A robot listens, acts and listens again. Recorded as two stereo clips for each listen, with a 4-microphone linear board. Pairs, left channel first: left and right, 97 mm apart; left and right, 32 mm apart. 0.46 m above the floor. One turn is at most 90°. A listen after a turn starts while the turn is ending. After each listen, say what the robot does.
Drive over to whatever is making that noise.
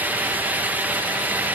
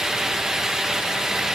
Keep listening.
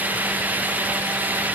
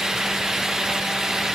Keep listening.
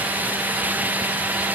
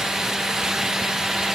I can't make out anything to turn to.